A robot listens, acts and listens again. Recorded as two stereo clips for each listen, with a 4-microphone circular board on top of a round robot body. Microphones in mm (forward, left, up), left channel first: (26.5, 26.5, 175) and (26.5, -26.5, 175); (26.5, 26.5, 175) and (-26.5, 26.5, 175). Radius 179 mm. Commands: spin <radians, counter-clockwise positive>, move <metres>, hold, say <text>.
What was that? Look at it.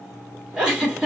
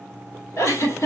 spin -0.26
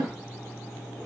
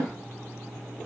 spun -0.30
hold
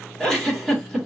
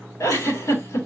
say Found it: a giggle, straight ahead, 2 to 4 m away.